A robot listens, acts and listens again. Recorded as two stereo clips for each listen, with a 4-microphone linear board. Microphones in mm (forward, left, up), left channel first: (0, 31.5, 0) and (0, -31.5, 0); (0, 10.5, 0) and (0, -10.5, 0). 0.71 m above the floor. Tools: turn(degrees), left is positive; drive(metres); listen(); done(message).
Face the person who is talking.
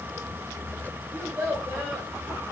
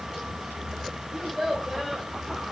turn(degrees=-20)
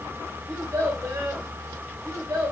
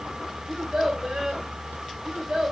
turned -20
turn(degrees=-140)
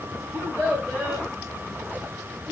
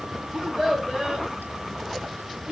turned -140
turn(degrees=-25)
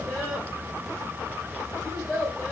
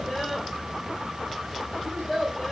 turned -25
done("Facing the child speaking.")